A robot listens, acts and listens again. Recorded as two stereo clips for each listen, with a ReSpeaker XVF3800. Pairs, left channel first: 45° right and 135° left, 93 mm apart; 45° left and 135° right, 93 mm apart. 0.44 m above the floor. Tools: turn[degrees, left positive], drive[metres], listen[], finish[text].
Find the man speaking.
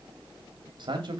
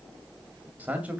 Thought: The man speaking: 155° left.
Action: turn[155]
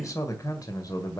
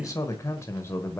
Thought: The man speaking is now 15° right.
Action: turn[-15]
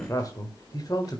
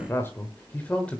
Thought: The man speaking is now 30° right.
Action: turn[-30]
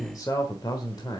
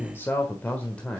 Thought: The man speaking is now 30° right.
Action: turn[-30]
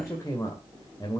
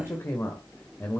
Thought: The man speaking is now 15° right.
Action: turn[-15]
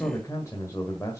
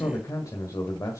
Action: finish[Found it: a man speaking, straight ahead, 1 to 2 m away.]